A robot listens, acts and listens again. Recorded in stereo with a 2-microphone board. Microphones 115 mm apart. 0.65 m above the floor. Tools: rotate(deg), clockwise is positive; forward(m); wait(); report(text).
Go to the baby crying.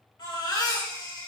rotate(-40)
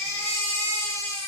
rotate(-105)
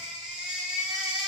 forward(1.0)
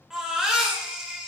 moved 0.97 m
forward(1.0)
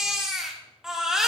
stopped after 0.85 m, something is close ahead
report("Arrived at the baby crying, straight ahead.")